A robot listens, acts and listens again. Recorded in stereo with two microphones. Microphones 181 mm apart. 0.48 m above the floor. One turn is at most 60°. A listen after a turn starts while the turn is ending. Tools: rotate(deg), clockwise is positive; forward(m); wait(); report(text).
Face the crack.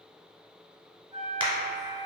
rotate(25)
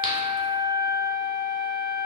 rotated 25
wait()
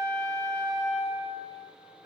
report("I heard a crack, but can't make it out now. It was about straight ahead or 130° right.")